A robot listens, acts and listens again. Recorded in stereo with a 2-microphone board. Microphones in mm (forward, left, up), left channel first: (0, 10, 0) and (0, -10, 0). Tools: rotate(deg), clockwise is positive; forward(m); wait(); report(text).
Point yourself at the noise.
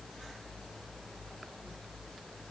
wait()
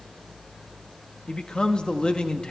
rotate(-45)
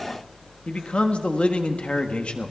rotate(-85)
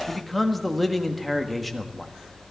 report("Facing the man speaking.")